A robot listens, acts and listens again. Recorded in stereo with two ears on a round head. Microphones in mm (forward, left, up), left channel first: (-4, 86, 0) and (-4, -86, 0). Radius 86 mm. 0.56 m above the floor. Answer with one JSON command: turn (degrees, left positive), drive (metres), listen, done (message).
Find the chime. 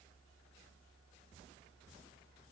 {"listen": true}
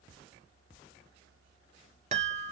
{"turn": -40}
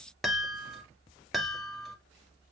{"done": "Found it: a chime, straight ahead."}